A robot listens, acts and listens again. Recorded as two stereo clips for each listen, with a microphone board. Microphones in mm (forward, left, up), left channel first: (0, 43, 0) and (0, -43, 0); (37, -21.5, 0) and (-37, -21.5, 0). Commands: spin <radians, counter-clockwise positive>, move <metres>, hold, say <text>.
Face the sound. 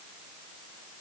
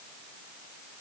hold
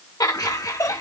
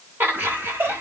spin 2.27
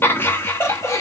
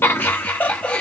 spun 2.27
spin 1.05
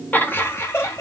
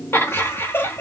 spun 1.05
spin 0.79
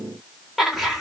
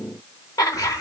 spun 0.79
say Facing the laughter, 1 to 2 m away.